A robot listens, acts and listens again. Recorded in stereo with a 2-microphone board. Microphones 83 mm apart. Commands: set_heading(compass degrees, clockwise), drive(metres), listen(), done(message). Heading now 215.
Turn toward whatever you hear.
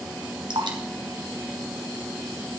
set_heading(280)
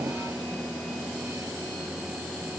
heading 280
listen()
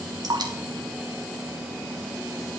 set_heading(335)
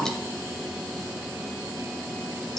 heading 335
listen()
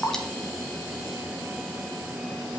done("Found it: dripping, straight ahead, 2 to 4 m away.")